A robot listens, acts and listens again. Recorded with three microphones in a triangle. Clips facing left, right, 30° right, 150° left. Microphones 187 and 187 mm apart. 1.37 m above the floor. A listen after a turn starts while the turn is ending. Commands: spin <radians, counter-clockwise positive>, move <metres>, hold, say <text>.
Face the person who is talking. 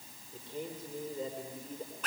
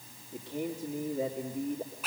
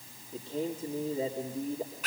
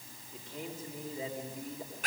spin -1.57
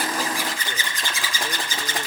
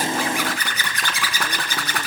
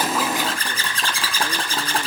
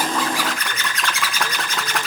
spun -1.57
hold
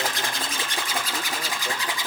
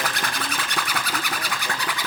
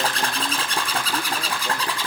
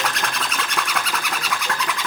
hold
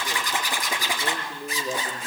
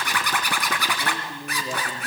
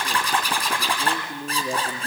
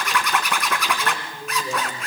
say Facing the man speaking, 2 to 4 m away.